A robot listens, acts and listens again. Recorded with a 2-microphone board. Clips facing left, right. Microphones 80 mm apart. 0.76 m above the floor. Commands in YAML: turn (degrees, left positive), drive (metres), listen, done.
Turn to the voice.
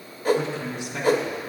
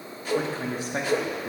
turn: -40
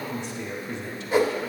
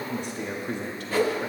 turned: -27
turn: -105
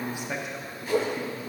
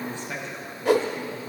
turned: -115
turn: 15
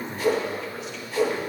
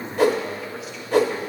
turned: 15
done: "Found it: a man speaking, straight ahead."